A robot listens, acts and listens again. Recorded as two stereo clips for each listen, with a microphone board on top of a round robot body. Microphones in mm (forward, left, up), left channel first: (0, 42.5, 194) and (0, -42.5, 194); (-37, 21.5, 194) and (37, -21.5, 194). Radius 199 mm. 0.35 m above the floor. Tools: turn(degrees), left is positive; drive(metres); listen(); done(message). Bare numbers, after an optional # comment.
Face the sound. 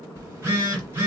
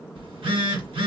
# The phone buzzing: 30° right.
turn(-30)
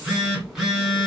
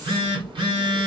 done("Found it: a phone buzzing, straight ahead.")